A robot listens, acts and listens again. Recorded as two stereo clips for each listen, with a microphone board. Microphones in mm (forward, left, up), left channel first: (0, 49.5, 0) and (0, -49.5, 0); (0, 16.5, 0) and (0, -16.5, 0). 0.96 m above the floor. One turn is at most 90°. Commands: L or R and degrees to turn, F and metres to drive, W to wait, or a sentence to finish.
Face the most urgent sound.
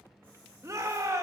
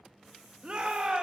R30
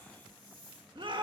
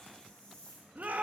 R90
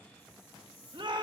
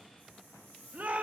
R60
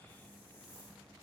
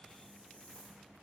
W
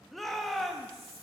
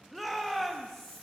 Facing the shout.